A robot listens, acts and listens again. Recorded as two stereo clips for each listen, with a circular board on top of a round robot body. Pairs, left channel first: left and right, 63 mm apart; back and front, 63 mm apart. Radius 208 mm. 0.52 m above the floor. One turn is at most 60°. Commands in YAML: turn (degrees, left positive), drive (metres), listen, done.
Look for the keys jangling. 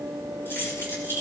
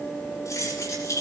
turn: 60
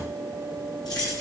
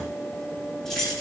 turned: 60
turn: 60
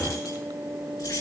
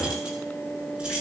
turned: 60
turn: 60
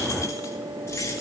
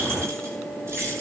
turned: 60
turn: 45
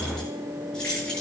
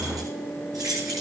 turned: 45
turn: 15
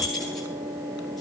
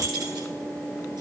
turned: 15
done: "Found it: keys jangling, straight ahead, over 4 m away."